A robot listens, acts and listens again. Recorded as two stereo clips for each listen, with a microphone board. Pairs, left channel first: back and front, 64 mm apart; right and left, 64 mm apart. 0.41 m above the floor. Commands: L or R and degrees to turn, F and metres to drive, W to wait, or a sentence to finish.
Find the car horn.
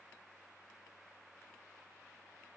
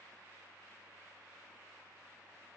W
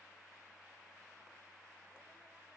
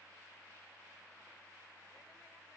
W
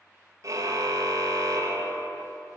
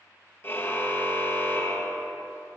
R40
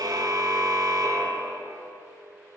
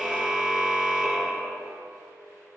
Found it: a car horn, straight ahead.